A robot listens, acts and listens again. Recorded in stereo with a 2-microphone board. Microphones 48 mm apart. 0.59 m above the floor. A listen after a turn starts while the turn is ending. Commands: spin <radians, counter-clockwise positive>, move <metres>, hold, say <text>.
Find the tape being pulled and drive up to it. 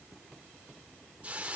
hold
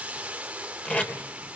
spin 0.52
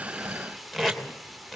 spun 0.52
move 1.0
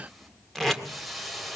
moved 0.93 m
move 1.0
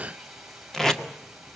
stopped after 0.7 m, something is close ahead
spin 0.26
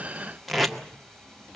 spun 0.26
say Arrived at the tape being pulled, straight ahead.